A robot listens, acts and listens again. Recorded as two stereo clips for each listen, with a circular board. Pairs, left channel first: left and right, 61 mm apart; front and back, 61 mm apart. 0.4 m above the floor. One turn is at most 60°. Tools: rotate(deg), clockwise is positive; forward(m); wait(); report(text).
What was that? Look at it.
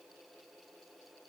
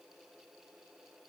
wait()
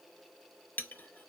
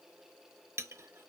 rotate(-60)
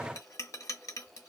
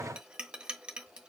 rotate(-60)
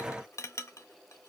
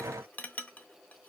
rotate(-60)
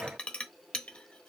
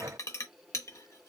rotate(-20)
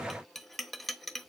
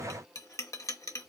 report("Found it: a clink, straight ahead, under 1 m away.")